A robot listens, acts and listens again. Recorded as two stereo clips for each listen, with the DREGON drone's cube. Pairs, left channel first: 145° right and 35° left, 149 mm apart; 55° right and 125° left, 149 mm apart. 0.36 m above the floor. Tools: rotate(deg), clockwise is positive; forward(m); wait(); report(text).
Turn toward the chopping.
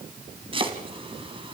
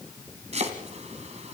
rotate(-85)
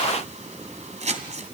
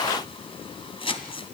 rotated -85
report("Facing the chopping, 2 to 4 m away.")